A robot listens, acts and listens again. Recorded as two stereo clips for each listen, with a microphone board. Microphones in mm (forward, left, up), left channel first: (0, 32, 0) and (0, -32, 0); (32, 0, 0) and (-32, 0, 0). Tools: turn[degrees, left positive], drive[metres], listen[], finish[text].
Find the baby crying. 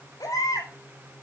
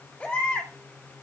Thought: The baby crying: 70° left.
Action: turn[70]
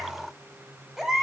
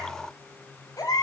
Action: finish[Facing the baby crying, over 4 m away.]